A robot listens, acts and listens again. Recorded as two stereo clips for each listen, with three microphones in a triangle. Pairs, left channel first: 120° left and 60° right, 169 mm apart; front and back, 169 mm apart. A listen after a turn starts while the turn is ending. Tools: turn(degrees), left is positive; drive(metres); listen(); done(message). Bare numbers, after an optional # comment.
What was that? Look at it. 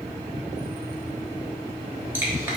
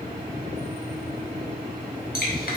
# The dripping: 15° left.
turn(15)
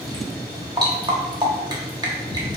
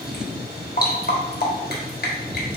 done("Facing the dripping.")